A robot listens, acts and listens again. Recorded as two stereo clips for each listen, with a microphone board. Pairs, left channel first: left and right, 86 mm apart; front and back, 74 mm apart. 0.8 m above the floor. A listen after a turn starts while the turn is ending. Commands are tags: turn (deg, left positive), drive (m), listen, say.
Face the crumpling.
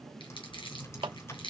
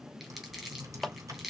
<turn deg="95"/>
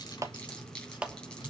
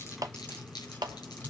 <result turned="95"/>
<turn deg="10"/>
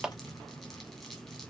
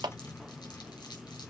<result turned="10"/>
<listen/>
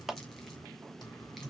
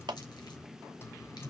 <listen/>
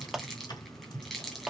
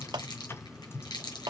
<say>Facing the crumpling, 2 to 4 m away.</say>